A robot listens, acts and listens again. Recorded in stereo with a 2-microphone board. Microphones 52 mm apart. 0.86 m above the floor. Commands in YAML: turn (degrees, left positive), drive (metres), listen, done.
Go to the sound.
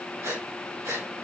turn: -90
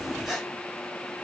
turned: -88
drive: 1.0
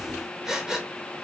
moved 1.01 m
turn: -10
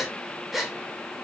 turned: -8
drive: 1.0
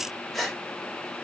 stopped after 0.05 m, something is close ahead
done: "I am next to the breathing."